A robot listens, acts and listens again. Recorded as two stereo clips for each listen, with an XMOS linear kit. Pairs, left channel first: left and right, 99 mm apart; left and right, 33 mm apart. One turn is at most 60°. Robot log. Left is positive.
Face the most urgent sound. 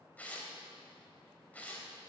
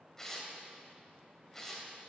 cmd idle
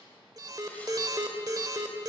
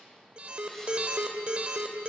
note: The alarm: about 40° right or 140° right.
cmd yaw -40
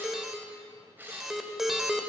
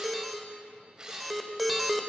end: Facing the alarm.